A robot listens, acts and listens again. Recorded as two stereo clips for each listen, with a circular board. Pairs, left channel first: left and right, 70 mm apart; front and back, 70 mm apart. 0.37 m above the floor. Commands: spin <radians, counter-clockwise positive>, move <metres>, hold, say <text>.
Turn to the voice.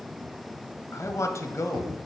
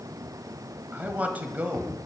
spin 2.09
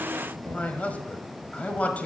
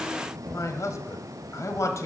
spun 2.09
spin 0.44
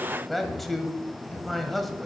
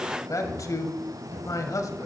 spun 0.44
say Facing the man speaking.